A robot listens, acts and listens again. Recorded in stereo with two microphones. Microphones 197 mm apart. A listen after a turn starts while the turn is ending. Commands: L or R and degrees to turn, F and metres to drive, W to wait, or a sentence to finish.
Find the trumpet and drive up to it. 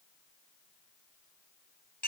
W
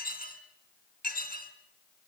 W
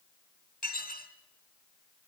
I can't make out a trumpet to turn to.